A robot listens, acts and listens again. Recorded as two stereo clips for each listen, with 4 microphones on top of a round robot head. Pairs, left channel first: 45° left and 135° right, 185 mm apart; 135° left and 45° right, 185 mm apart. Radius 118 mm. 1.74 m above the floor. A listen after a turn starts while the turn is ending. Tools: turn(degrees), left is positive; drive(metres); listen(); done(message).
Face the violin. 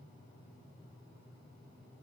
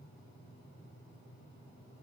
listen()
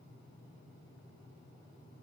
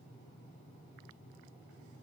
listen()
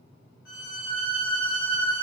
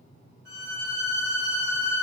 done("Found it: a violin, straight ahead.")